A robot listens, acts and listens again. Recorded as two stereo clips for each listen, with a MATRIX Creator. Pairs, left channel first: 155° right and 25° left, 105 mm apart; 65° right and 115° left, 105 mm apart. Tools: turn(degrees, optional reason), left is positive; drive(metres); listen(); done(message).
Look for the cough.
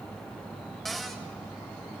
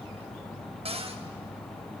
listen()
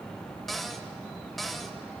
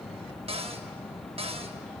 listen()
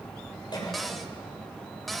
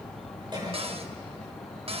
turn(degrees=160, reason="The cough: 160° left.")
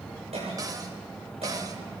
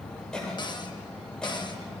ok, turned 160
turn(degrees=15, reason="The cough is now 15° left.")
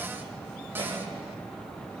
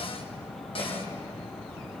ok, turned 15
listen()
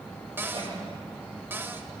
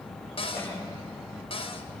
listen()
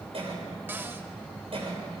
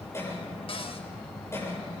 done("Found it: a cough, straight ahead, over 4 m away.")